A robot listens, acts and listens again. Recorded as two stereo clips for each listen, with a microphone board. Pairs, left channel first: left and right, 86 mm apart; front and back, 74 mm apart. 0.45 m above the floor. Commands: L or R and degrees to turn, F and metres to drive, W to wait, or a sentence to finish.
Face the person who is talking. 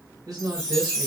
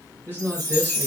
R55
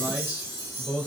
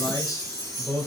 R20
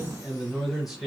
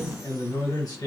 Found it: a man speaking, straight ahead.